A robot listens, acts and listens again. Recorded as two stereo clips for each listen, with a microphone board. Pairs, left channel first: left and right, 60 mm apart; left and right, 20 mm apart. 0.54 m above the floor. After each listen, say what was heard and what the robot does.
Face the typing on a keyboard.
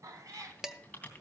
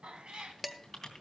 The typing on a keyboard: about 25° left or 155° left. Turn 25° left.
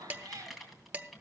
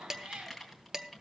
Facing the typing on a keyboard.